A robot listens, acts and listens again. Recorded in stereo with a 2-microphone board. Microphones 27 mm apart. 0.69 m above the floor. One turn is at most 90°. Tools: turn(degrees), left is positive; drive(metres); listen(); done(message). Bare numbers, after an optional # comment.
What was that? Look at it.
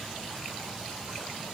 listen()
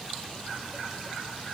listen()
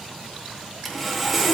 turn(30)
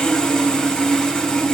# So it is at 150° left.
turn(90)
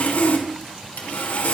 # The sawing is now 85° left.
turn(85)
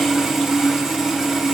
# The sawing is now 15° right.
turn(-15)
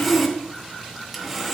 done("Facing the sawing, 2 to 4 m away.")